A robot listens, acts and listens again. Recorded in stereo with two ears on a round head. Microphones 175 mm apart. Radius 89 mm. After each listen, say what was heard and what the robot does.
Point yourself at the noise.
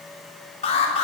The alarm: about 30° left or 150° left. Turn 30° left.
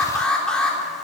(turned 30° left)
Found it: an alarm, straight ahead.